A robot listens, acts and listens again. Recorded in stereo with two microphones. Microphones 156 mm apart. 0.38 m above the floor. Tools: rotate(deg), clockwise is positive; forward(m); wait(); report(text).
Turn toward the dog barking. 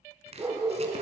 rotate(30)
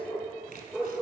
report("Found it: a dog barking, straight ahead.")